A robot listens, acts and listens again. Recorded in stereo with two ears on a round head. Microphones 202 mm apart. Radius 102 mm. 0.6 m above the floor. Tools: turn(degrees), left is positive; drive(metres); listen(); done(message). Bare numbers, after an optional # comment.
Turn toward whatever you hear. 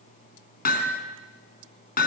# The hammering: about 45° left or 135° left.
turn(45)
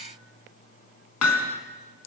# So it is at 95° left.
turn(95)
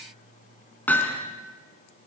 done("Facing the hammering, 2 to 4 m away.")